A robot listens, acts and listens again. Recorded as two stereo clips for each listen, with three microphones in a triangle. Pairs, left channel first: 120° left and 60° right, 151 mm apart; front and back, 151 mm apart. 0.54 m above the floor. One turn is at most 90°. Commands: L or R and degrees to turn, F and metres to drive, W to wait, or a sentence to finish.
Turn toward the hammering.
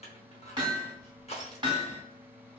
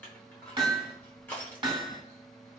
R90
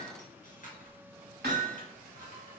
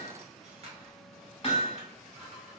R55
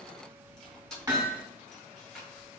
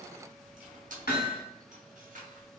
L10
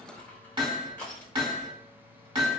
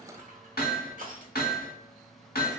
Found it: hammering, straight ahead, under 1 m away.